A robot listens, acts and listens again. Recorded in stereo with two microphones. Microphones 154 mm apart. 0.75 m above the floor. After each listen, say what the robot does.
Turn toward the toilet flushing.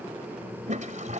Turn 55° right.
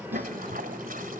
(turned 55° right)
Turn 70° right.
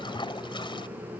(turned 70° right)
Turn 35° left.
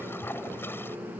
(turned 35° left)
Turn 15° left.
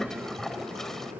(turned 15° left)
Facing the toilet flushing.